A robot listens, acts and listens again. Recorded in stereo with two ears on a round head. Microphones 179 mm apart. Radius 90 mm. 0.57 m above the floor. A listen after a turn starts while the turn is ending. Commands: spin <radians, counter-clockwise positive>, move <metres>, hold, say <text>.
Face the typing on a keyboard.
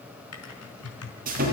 spin 1.57
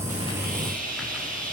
hold
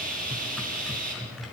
say Facing the typing on a keyboard, over 4 m away.